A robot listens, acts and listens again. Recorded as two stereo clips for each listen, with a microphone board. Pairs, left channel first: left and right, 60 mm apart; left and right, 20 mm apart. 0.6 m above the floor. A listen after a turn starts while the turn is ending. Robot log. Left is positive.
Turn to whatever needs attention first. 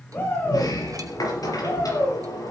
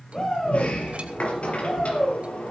note: The shout: about 40° left or 140° left.
cmd yaw +40
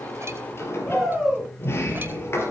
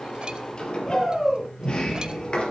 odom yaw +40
end: Facing the shout.